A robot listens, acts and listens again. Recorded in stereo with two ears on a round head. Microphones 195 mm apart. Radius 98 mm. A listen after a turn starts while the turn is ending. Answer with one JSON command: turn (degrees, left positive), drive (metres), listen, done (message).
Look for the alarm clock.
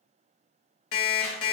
{"turn": 70}
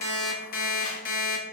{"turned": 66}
{"turn": 40}
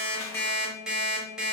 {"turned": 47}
{"done": "Facing the alarm clock."}